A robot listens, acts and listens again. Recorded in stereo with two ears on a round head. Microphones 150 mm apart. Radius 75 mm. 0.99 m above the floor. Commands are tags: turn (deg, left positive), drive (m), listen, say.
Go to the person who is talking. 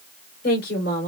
<turn deg="60"/>
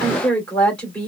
<drive m="1.0"/>
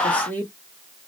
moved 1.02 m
<turn deg="10"/>
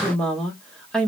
<drive m="1.0"/>
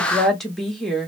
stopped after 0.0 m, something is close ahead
<say>Arrived at the woman speaking, straight ahead.</say>